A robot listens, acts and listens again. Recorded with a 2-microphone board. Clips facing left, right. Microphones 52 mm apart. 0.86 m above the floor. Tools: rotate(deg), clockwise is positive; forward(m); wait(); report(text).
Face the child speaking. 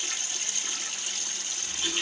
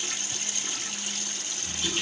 wait()
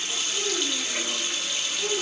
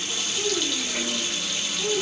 rotate(-50)
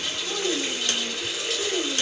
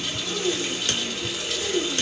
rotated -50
rotate(-85)
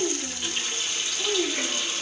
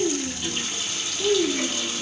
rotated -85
rotate(-20)
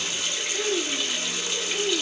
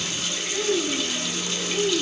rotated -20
report("Facing the child speaking, 2 to 4 m away.")